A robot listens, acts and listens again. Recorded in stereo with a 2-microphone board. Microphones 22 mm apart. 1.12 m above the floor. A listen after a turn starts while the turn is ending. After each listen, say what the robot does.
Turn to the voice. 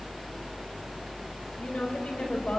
Turn 65° left.
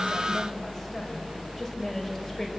Keep listening.
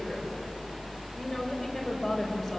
Found it: a woman speaking, straight ahead.